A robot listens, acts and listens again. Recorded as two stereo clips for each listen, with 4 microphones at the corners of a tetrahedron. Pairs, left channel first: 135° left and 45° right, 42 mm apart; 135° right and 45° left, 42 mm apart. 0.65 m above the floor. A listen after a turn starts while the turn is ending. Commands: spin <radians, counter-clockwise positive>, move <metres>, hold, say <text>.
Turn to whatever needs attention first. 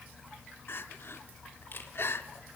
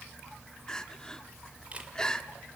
spin 2.62
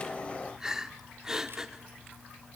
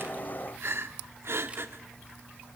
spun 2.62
spin 0.52
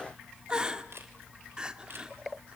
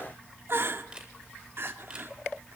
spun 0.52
spin 0.44
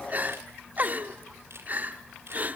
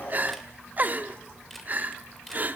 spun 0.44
say Facing the crying, 1 to 2 m away.